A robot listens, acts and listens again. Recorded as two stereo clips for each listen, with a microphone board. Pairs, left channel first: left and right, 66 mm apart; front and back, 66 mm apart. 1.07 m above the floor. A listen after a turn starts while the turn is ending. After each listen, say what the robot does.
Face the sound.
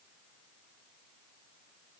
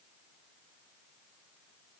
Keep listening.
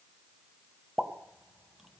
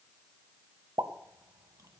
Turn 175° right.
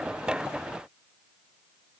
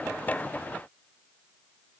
I heard a pop from this way, but can't make it out now.